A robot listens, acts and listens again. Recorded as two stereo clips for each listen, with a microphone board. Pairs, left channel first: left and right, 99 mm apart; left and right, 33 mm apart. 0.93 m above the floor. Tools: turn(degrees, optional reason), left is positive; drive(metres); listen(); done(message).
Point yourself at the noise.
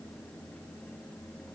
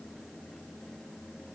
listen()
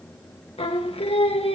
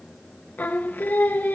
turn(degrees=90)
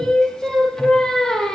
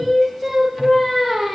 done("Facing the singing, 1 to 2 m away.")